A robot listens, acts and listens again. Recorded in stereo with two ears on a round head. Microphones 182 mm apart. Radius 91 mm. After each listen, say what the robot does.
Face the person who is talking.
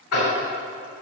Keep listening.
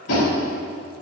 Keep listening.
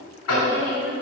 Turn 60° left.
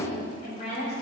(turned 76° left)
Turn 30° left.
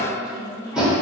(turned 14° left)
Turn 15° left.
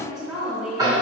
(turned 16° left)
Found it: a woman speaking, straight ahead, 2 to 4 m away.